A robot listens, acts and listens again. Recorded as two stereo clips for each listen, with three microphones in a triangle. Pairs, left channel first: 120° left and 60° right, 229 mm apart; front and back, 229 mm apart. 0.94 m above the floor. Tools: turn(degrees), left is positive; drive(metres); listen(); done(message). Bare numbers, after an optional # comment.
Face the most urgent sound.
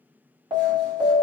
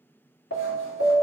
# The alarm: 10° left.
turn(10)
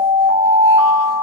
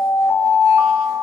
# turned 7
done("Found it: an alarm, straight ahead, 1 to 2 m away.")